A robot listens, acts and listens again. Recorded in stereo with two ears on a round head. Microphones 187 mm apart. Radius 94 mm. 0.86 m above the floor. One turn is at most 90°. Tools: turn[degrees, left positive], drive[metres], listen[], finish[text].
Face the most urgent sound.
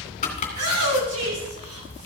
Action: turn[-90]
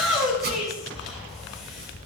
Action: finish[Found it: a shout, straight ahead.]